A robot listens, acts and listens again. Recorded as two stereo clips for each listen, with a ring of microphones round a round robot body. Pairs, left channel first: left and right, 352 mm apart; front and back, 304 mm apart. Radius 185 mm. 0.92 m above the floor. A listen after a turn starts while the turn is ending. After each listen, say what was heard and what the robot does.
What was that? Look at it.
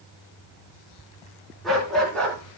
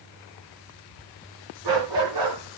The dog barking: 175° left. Turn 175° left.
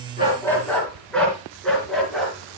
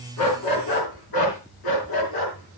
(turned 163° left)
Found it: a dog barking, straight ahead.